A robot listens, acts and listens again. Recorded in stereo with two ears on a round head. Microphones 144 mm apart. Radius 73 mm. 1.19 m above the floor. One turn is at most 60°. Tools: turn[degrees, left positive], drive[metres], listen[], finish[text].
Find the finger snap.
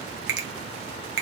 Thought: The finger snap: about 65° right or 115° right.
Action: turn[-60]
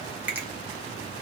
Action: listen[]
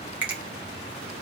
Thought: So it is at 10° right.
Action: turn[-10]
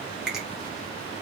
Action: listen[]
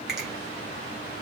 Action: listen[]
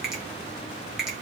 Action: finish[I heard a finger snap from this way, but can't make it out now.]